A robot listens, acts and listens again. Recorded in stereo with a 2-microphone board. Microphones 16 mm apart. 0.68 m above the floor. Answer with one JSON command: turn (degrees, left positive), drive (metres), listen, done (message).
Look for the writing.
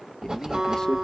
{"turn": -65}
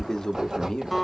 {"turn": -45}
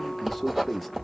{"done": "Facing the writing."}